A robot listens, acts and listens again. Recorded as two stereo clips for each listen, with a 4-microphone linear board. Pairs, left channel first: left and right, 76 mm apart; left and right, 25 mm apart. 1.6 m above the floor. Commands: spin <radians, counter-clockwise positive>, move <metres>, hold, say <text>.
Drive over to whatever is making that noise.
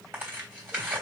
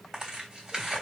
spin -0.44
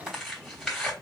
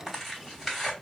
move 1.0
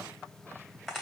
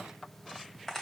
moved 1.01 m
move 1.0
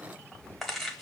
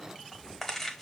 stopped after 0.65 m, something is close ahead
say Arrived at the tearing paper, straight ahead.